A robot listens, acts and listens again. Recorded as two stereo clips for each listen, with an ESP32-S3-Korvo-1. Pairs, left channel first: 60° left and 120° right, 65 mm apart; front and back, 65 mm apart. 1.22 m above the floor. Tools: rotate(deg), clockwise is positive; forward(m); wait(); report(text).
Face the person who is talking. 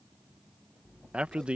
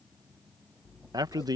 rotate(-165)
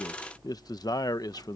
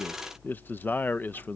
rotate(-60)
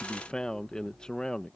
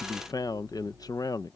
rotate(20)
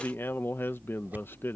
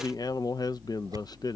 report("Found it: a man speaking, straight ahead.")